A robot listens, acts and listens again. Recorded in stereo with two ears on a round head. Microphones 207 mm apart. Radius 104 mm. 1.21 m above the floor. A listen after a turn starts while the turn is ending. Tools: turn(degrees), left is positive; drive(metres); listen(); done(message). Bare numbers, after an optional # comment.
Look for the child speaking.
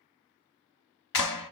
listen()
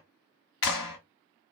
listen()
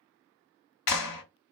done("I can't make out a child speaking to turn to.")